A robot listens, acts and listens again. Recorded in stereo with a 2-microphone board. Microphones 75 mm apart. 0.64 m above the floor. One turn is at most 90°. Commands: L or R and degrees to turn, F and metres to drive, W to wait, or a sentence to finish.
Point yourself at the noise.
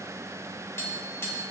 L35
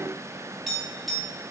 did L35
Facing the tapping.